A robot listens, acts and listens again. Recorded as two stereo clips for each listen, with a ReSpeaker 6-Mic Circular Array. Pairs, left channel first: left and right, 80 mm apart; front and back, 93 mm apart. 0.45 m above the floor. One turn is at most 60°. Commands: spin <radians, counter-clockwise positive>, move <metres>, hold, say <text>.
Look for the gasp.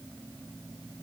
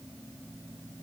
hold
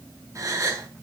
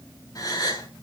spin -0.70
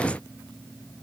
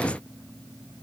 say Facing where the gasp came from. I can't hear it now.